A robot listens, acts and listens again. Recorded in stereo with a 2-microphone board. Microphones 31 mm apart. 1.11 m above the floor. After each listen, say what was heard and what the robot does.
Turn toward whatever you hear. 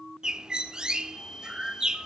The bird: about 25° right or 155° right. Turn 25° right.
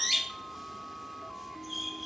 Found it: a bird, straight ahead, 1 to 2 m away.